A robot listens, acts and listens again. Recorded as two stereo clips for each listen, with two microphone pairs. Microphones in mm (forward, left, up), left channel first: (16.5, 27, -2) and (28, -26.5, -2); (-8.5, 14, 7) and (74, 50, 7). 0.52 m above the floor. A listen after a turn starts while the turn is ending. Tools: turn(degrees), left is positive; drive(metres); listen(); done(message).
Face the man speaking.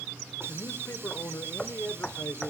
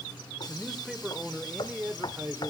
turn(degrees=75)
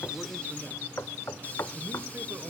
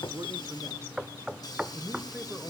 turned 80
turn(degrees=-50)
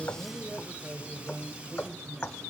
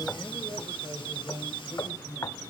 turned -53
turn(degrees=-15)
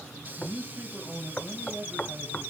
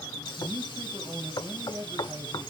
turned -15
done("Found it: a man speaking, straight ahead, 2 to 4 m away.")